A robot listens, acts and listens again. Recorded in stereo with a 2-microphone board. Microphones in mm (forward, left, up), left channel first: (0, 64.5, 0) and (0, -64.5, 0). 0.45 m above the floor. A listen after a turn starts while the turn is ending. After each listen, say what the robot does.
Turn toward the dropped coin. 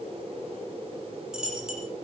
Turn 30° right.
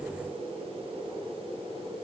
Keep listening.
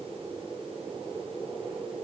I heard a dropped coin, but can't make it out now. It was about 25° left or 145° right.